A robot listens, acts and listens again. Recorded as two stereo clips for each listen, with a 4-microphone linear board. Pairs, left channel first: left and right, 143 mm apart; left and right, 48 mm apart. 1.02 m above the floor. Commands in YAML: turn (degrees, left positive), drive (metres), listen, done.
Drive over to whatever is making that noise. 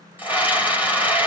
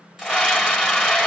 turn: -30
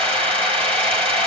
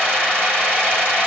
turn: -140
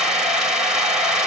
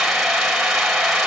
drive: 1.0
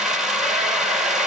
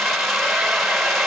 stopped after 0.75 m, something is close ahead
done: "Something is in my way. I am facing the scream but have not reached it."